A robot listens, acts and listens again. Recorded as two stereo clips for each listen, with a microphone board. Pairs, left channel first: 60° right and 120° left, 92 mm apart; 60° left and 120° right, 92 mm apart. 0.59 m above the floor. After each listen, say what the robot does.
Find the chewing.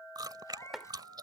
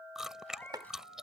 Turn 155° left.
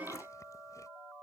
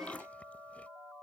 Keep listening.
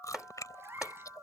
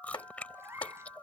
Turn 15° right.
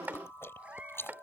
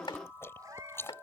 Found it: chewing, straight ahead.